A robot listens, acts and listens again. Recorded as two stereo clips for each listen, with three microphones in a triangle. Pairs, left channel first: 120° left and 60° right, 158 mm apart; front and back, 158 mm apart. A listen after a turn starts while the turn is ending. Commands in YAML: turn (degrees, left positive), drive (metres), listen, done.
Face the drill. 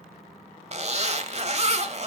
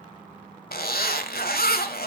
listen: true
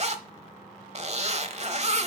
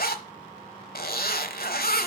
listen: true
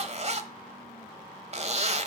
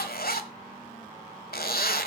done: "I can't make out a drill, only a zipper."